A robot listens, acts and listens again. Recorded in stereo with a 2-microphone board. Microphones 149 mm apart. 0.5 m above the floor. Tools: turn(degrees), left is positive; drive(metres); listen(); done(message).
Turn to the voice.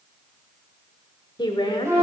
turn(degrees=30)
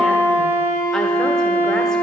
listen()
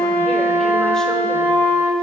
listen()
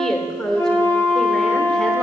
done("Found it: a woman speaking, straight ahead.")